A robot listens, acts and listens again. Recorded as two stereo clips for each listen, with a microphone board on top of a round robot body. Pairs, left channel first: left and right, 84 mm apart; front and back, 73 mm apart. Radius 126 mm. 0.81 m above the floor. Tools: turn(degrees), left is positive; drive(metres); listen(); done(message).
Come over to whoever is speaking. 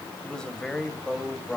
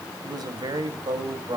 turn(degrees=170)
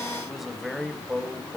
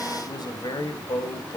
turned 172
drive(metres=1.0)
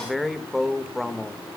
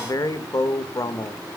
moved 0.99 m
drive(metres=1.0)
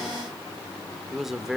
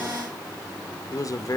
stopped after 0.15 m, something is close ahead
done("Arrived at the man speaking, straight ahead.")